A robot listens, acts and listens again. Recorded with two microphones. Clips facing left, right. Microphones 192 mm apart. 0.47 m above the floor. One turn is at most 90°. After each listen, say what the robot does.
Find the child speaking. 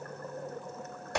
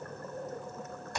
Keep listening.
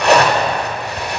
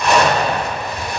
Keep listening.
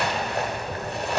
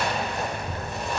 Turn 70° right.
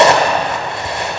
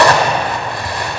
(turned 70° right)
Keep listening.
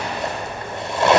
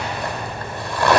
Turn 35° right.
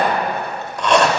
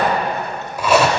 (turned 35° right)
Keep listening.
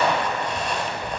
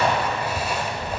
Turn 15° right.
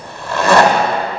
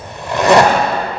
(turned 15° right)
Found it: a child speaking, straight ahead.